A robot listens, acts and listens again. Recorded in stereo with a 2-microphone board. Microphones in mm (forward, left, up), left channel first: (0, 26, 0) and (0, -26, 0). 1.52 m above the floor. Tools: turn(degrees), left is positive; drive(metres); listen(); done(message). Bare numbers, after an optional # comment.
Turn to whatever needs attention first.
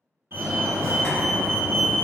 # The fire alarm: about 60° right or 120° right.
turn(-60)
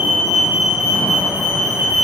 # So it is at 45° right.
turn(-45)
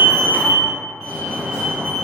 done("Facing the fire alarm.")